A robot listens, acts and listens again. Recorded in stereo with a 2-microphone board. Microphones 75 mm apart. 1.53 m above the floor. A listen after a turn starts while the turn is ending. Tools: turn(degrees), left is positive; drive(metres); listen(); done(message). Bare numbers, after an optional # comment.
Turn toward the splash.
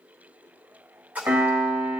# The splash: about 20° right or 160° right.
turn(-20)
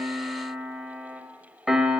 listen()
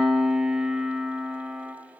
done("I heard a splash, but can't make it out now. It was about straight ahead or 140° right.")